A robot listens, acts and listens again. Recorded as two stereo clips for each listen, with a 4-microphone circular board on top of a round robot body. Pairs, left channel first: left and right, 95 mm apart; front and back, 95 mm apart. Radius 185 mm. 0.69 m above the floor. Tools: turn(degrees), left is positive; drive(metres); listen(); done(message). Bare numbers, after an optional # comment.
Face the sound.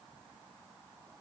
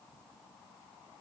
listen()
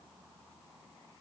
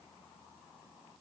listen()
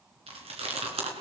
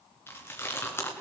# The chewing: 70° right.
turn(-70)
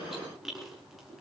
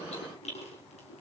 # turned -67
done("Found it: chewing, straight ahead, 2 to 4 m away.")